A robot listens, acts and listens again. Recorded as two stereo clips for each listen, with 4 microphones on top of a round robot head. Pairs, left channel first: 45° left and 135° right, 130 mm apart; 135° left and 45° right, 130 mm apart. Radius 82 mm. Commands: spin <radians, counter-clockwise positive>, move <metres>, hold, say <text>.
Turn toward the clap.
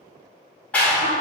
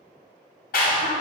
spin 2.18
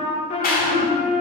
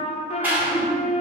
spin 0.52
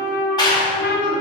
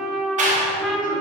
spin -0.26
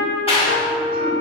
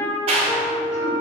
say Facing the clap.